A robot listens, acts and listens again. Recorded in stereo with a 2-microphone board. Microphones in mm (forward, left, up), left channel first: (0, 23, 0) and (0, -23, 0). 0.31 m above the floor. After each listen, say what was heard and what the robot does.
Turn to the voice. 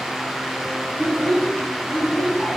The child speaking: about 50° left or 130° left. Turn 50° left.
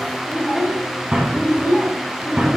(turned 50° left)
So it is at 25° right. Turn 25° right.
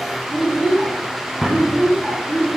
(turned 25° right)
The child speaking is now 30° right. Turn 30° right.
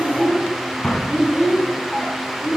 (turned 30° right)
Found it: a child speaking, straight ahead.